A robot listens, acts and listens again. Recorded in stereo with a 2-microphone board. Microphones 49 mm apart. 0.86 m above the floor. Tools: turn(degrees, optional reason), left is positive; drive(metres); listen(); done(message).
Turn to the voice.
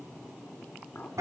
listen()
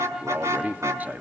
turn(degrees=-35, reason="The man speaking: about 35° right or 145° right.")
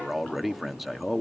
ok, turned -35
done("Facing the man speaking, 1 to 2 m away.")